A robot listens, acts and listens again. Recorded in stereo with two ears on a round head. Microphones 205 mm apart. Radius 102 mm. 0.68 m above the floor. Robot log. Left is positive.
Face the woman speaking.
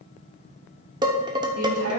note: The woman speaking: about 75° right or 105° right.
cmd yaw -75
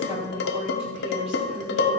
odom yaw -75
note: So it is at 30° right.
cmd yaw -30
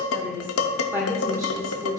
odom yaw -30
note: The woman speaking is now 15° right.
cmd yaw -15
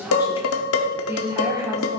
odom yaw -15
note: The woman speaking is now 15° right.
cmd yaw -15
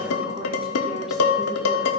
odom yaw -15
cmd idle
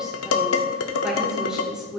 end: Facing the woman speaking.